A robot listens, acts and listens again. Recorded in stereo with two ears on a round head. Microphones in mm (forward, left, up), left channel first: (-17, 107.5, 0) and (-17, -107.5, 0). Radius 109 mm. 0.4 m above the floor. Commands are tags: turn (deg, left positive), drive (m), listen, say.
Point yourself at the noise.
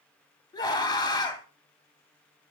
<turn deg="20"/>
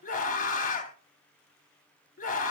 <turn deg="140"/>
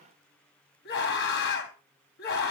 <turn deg="50"/>
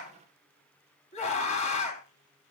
<turn deg="30"/>
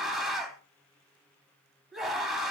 <say>Found it: a scream, straight ahead, 2 to 4 m away.</say>